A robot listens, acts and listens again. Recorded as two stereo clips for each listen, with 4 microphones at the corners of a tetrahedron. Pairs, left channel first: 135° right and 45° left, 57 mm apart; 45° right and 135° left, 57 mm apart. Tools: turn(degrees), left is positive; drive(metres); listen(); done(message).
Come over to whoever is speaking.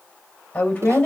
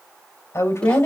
turn(degrees=-70)
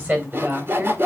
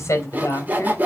turn(degrees=-15)
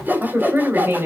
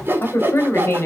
drive(metres=1.0)
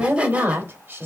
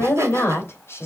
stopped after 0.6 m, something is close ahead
done("Something is in my way. I am facing the woman speaking but have not reached it.")